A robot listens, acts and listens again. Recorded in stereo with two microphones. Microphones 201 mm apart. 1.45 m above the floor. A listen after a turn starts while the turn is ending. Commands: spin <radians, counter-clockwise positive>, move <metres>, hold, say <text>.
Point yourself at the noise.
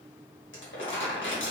spin 1.22
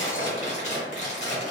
spin 0.61
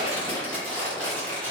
say Facing the crumpling, 1 to 2 m away.